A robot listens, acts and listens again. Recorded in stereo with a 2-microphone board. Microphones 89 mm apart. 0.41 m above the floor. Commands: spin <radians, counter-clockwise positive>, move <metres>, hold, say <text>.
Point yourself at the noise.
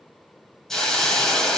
spin 0.52
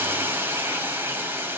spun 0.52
spin -0.44
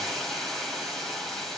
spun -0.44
say Found it: a hiss, straight ahead.